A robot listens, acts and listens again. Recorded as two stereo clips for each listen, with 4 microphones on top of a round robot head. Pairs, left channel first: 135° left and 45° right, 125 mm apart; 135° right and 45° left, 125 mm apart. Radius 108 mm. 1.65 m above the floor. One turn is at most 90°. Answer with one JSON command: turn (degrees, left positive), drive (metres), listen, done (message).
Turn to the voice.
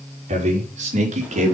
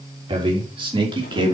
{"turn": -10}
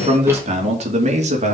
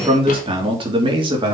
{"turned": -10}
{"turn": -10}
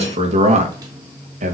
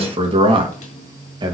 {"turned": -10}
{"turn": -15}
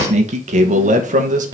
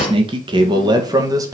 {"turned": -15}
{"turn": -20}
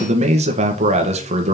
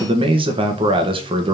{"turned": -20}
{"done": "Facing the man speaking, 1 to 2 m away."}